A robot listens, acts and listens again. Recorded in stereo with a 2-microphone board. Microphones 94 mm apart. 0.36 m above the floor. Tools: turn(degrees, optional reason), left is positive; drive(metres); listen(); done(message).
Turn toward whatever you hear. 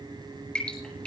turn(degrees=30)
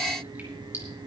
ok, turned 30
listen()
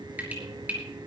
turn(degrees=-20, reason="So it is at 20° right.")
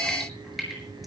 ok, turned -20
done("Found it: dripping, straight ahead.")